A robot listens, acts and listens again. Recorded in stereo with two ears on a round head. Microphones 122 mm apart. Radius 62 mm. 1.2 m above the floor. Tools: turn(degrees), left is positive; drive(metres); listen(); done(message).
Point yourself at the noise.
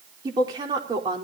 turn(degrees=-35)
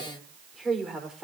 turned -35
done("Facing the woman speaking.")